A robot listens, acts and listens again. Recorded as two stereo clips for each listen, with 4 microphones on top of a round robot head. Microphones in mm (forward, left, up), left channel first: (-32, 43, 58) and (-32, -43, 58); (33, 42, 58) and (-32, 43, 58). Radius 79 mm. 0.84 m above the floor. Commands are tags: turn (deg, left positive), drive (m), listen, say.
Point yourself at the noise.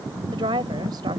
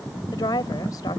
<turn deg="-45"/>
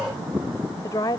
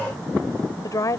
<turn deg="35"/>
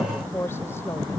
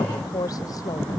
<turn deg="20"/>
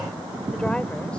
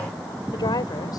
<listen/>
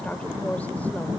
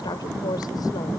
<turn deg="10"/>
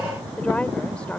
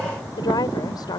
<turn deg="10"/>
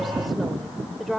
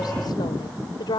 <say>Facing the woman speaking.</say>